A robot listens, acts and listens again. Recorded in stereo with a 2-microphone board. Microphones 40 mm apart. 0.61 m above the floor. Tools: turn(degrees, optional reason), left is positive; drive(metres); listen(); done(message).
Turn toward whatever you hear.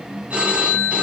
turn(degrees=-35, reason="The phone ringing: about 35° right or 145° right.")
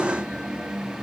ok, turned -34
listen()
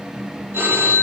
turn(degrees=-110, reason="So it is at 110° right.")
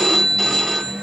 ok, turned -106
done("Facing the phone ringing, 2 to 4 m away.")